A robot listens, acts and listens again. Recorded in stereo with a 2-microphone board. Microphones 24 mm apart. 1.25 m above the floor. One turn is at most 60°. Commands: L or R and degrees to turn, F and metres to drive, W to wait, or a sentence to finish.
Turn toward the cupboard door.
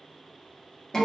W
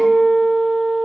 W
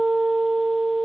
I can't make out a cupboard door to turn to.